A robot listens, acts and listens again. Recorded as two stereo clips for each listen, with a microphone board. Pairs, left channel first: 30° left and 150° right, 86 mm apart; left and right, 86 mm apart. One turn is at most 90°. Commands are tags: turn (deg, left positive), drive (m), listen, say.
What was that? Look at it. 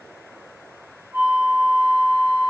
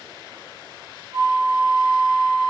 <turn deg="-80"/>
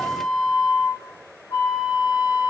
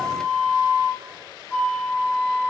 <turn deg="15"/>
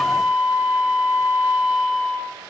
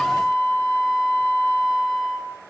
<say>Facing the flute, 1 to 2 m away.</say>